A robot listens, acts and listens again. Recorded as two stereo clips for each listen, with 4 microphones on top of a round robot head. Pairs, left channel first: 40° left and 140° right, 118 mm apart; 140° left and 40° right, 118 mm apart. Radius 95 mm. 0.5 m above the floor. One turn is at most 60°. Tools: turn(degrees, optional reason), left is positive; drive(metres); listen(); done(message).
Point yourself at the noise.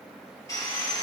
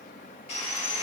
turn(degrees=60, reason="The sawing: 105° left.")
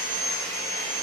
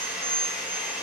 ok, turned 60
turn(degrees=40, reason="The sawing is now 40° left.")
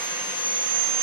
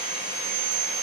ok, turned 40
turn(degrees=-15, reason="The sawing is now 15° right.")
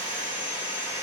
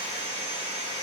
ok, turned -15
done("Found it: sawing, straight ahead, 2 to 4 m away.")